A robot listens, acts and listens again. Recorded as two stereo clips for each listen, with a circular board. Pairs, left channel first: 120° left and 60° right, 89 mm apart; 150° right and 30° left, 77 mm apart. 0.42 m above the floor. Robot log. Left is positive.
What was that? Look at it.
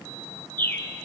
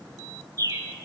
note: The bird: 55° left.
cmd yaw +55
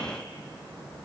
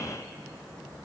cmd idle
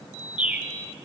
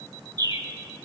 note: The bird is now 10° left.
cmd yaw +10
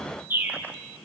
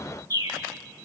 end: Found it: a bird, straight ahead.